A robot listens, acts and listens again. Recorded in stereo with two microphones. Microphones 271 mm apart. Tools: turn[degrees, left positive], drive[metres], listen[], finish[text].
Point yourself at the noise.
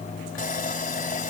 Thought: The sawing: about 30° left or 150° left.
Action: turn[30]
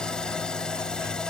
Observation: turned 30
Action: finish[Facing the sawing.]